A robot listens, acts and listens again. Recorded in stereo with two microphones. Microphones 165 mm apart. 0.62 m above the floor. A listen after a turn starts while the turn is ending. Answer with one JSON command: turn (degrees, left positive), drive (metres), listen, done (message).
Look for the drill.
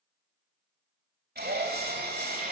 {"turn": -75}
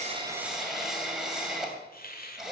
{"done": "Found it: a drill, straight ahead."}